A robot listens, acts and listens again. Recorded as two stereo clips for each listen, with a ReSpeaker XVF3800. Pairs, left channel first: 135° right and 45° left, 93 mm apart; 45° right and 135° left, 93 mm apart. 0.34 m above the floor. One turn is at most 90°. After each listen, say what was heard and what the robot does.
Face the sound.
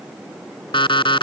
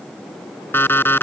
The alarm clock: 110° right. Turn 90° right.
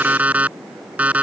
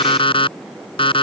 The alarm clock is now 30° right. Turn 30° right.
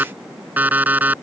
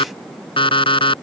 The alarm clock is now 25° right. Turn 25° right.
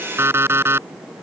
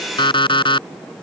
The alarm clock is now 20° right. Turn 20° right.
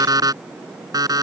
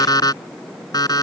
Found it: an alarm clock, straight ahead.